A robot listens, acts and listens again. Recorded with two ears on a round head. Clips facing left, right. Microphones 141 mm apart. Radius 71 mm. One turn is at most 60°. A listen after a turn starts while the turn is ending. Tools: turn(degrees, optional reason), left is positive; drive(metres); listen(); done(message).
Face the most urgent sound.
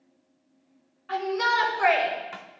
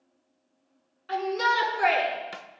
turn(degrees=-45, reason="The shout: about 45° right or 135° right.")
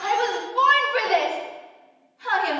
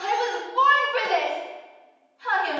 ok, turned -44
done("Found it: a shout, straight ahead.")